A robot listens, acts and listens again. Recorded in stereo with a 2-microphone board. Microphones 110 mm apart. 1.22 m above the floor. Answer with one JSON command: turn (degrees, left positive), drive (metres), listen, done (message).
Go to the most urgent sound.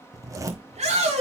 {"turn": -75}
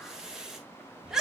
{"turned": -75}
{"drive": 1.0}
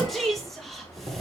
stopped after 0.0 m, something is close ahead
{"done": "Something is in my way. I am facing the shout but have not reached it."}